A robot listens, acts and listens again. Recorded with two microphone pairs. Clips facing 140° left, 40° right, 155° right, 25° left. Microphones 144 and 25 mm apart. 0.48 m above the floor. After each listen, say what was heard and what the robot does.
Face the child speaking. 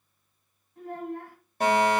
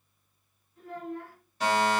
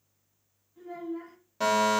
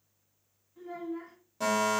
The child speaking: 105° left. Turn 105° left.
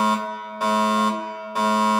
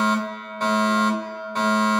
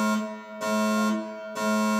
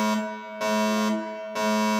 Keep listening.
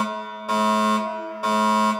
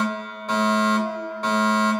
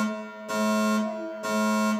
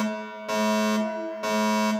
Keep listening.
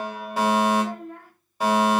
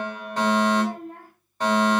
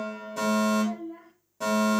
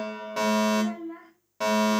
Facing the child speaking.